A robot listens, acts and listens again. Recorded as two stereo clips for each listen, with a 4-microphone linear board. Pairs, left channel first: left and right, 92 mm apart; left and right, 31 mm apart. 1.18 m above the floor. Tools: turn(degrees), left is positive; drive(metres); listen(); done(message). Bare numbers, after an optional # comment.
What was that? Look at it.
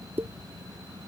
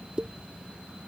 # The pop: about 25° right or 155° right.
turn(-25)
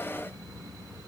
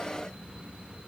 listen()
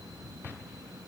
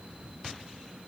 done("I heard a pop, but can't make it out now. It was about straight ahead or 130° right.")